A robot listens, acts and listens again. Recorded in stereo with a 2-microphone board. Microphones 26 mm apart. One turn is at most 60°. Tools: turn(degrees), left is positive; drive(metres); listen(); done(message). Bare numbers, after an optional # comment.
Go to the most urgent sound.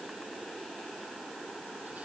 listen()
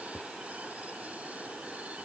listen()
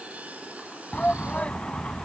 # The shout: about 60° left or 120° left.
turn(60)
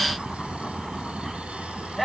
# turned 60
# So it is at 10° left.
turn(10)
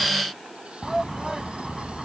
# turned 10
drive(1.0)
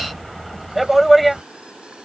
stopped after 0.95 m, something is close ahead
done("Arrived at the shout, straight ahead.")